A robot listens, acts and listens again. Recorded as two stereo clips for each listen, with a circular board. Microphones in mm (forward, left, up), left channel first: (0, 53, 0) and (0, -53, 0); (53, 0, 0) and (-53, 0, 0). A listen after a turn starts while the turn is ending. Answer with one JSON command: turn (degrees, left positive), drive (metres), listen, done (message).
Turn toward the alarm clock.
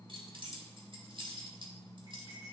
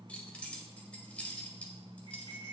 {"listen": true}
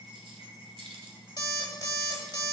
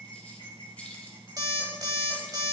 {"turn": 135}
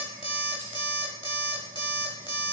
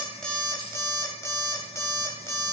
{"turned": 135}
{"turn": 55}
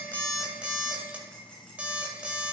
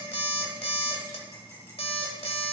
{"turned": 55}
{"turn": -15}
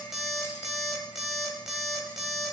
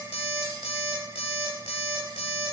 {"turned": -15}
{"done": "Facing the alarm clock, 1 to 2 m away."}